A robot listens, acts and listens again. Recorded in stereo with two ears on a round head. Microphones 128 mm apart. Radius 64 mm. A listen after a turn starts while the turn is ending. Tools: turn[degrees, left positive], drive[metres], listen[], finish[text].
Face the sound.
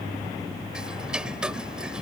Action: turn[-30]
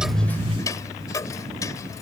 Thought: So it is at 25° left.
Action: turn[25]
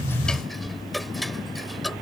Action: finish[Found it: ticking, straight ahead.]